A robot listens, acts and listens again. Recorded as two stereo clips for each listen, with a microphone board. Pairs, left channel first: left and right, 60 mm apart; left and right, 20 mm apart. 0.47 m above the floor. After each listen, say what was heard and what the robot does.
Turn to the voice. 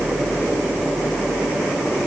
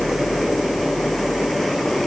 Keep listening.
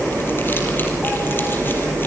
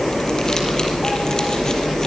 Keep listening.
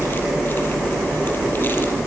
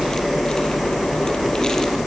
I can't make out anyone speaking.